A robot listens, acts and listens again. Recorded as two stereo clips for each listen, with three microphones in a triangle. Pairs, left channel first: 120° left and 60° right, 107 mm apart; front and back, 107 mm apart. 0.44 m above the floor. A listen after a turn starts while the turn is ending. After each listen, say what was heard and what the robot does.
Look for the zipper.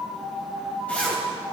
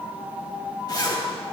The zipper: 45° left. Turn 45° left.
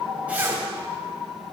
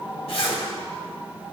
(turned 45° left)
Keep listening.
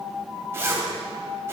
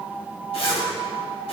Facing the zipper, 1 to 2 m away.